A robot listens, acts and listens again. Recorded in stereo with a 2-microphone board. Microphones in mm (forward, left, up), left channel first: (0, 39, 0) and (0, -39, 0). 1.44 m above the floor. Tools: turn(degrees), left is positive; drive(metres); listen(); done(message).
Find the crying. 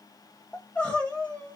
turn(degrees=15)
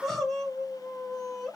done("Facing the crying.")